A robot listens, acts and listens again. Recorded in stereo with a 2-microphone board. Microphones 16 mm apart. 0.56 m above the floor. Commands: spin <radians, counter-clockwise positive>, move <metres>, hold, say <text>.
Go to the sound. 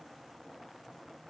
hold
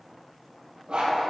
spin -1.57
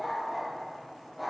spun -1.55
spin -0.17
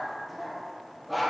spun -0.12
move 1.0
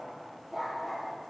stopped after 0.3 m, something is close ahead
spin -0.17
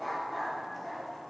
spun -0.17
say Blocked. The dog barking is further on, straight ahead.